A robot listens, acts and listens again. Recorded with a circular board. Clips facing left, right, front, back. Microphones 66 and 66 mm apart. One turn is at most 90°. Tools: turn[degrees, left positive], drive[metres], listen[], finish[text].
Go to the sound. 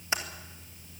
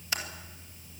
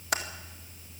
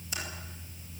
Thought: The typing on a keyboard: 20° left.
Action: turn[20]
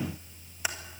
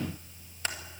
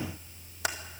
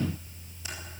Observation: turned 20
Action: listen[]
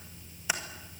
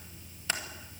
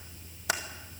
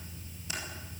Thought: The typing on a keyboard is now 10° left.
Action: turn[10]
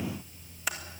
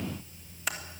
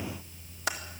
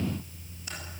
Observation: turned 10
Action: drive[1.0]
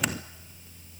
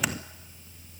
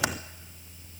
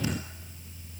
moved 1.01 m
Action: listen[]
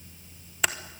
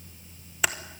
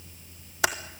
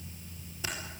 Action: drive[1.0]
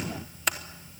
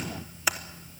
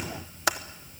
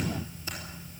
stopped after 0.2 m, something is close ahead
Action: finish[I am next to the typing on a keyboard.]